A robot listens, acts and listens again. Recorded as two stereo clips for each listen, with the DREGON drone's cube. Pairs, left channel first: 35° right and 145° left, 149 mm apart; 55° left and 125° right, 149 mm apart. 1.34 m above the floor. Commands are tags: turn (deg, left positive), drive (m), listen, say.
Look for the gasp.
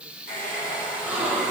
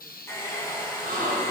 <turn deg="-135"/>
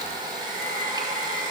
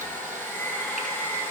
<say>I heard a gasp from this way, but can't make it out now.</say>